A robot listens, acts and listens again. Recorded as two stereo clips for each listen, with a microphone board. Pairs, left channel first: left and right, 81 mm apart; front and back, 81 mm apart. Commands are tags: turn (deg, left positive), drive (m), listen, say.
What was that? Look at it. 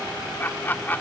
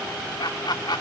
<turn deg="25"/>
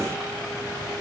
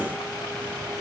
<listen/>
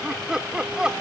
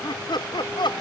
<turn deg="-10"/>
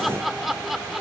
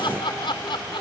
<say>Facing the laughter.</say>